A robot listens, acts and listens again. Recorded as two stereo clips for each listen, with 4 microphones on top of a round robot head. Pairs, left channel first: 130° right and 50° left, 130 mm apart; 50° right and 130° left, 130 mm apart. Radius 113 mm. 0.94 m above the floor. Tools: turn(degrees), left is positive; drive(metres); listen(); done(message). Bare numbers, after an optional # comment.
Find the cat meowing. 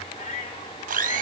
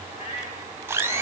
# The cat meowing: 90° right.
turn(-90)
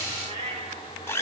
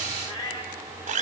# The cat meowing is now 10° left.
turn(10)
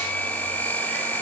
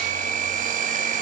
listen()
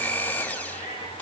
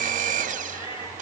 done("Found it: a cat meowing, straight ahead.")